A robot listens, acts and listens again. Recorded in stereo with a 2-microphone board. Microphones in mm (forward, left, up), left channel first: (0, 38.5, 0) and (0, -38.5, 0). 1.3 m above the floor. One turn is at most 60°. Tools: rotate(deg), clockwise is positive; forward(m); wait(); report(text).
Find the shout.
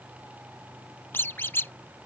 wait()
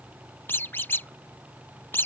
wait()
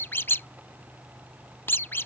report("I can't make out a shout to turn to.")